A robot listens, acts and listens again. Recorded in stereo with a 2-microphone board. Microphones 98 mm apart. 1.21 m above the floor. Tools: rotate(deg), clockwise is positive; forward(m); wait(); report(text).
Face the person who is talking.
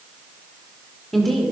rotate(-30)
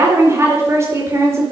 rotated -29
rotate(35)
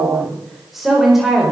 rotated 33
report("Facing the woman speaking, over 4 m away.")